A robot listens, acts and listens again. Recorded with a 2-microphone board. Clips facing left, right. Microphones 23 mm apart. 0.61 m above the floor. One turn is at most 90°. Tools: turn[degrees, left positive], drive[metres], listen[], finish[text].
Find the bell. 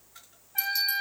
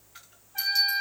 Thought: The bell: about 25° right or 155° right.
Action: turn[-25]
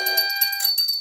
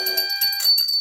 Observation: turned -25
Action: finish[Found it: a bell, straight ahead, 1 to 2 m away.]